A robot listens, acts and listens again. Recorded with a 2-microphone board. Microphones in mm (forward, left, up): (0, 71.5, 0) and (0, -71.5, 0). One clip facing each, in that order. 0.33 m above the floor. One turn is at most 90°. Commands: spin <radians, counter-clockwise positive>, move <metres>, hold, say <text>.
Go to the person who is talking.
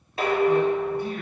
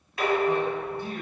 spin -0.52
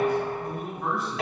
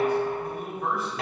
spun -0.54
move 1.0
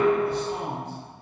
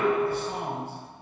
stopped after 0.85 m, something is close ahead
spin -0.17
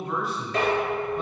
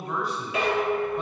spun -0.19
say I am next to the man speaking.